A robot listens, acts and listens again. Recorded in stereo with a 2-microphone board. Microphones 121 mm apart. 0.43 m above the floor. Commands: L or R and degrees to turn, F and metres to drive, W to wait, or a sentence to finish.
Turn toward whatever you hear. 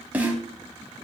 R30
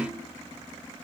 W
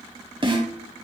R135
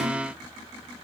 W
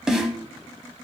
Facing the snare drum.